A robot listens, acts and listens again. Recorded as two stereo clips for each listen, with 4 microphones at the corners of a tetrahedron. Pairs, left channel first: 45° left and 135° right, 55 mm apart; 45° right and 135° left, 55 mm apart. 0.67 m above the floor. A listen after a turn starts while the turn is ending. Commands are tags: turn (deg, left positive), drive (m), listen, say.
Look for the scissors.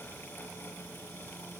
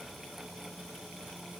<listen/>
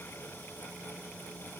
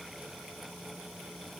<listen/>
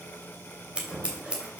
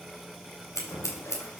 <turn deg="-65"/>
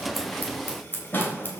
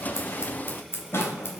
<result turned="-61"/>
<say>Found it: scissors, straight ahead, 2 to 4 m away.</say>